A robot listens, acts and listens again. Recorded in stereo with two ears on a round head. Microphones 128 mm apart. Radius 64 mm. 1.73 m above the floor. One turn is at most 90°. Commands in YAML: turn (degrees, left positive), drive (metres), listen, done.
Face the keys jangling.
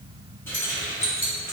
turn: 20
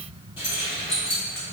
turn: 90
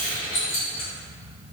turn: 45
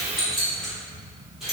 done: "Found it: keys jangling, straight ahead, over 4 m away."